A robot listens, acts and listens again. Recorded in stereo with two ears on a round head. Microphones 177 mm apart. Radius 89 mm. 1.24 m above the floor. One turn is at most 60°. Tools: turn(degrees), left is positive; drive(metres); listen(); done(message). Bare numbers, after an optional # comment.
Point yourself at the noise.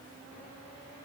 listen()
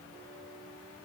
listen()
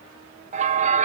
# The bell: about 35° right or 145° right.
turn(-35)
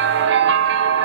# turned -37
# So it is at 100° right.
turn(-60)
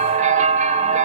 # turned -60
# The bell is now 45° right.
turn(-45)
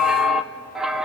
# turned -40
done("Found it: a bell, straight ahead.")